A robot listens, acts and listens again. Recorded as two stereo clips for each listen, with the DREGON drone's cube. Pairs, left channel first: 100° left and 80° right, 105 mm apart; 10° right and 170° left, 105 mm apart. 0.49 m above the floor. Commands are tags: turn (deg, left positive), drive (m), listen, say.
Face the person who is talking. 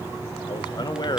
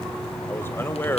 <turn deg="55"/>
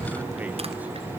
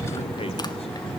<listen/>
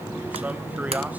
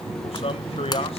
<say>Facing the man speaking, 2 to 4 m away.</say>